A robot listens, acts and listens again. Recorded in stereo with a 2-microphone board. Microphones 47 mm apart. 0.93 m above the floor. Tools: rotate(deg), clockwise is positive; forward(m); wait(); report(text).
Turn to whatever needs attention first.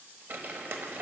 wait()
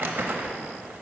wait()
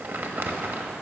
report("I can't make out anything urgent, only crumpling.")